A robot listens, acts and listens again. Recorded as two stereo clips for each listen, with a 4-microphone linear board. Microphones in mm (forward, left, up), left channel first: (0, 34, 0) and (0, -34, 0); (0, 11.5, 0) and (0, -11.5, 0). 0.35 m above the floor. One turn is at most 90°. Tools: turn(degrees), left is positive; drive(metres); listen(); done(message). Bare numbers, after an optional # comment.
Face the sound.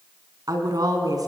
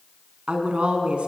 # The woman speaking: about 60° right or 120° right.
turn(-60)
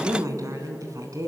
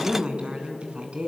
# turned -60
# So it is at 55° right.
turn(-55)
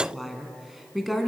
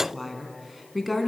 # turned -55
done("Facing the woman speaking, 2 to 4 m away.")